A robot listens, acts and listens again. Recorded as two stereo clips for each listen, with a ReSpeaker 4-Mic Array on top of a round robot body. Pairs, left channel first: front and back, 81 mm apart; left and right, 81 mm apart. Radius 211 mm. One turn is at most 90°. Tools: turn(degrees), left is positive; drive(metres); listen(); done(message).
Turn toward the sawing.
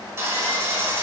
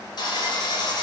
turn(degrees=90)
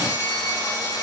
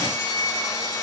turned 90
turn(degrees=45)
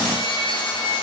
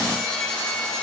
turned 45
turn(degrees=10)
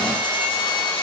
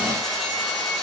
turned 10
done("Facing the sawing.")